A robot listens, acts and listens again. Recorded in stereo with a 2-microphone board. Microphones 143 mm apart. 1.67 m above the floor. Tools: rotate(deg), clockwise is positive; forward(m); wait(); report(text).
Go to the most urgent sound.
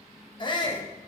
rotate(-35)
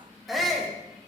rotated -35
forward(1.0)
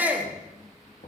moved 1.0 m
rotate(10)
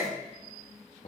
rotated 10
forward(1.0)
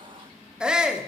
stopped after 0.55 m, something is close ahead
report("I am next to the shout.")